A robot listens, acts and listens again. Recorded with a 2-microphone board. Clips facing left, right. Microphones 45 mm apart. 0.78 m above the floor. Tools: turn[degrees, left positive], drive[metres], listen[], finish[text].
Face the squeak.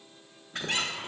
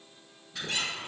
Thought: The squeak: about 50° left or 130° left.
Action: turn[50]
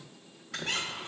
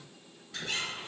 Thought: So it is at 80° left.
Action: turn[80]
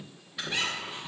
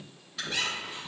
Thought: The squeak is now 15° left.
Action: turn[15]
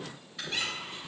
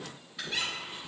Action: finish[Facing the squeak.]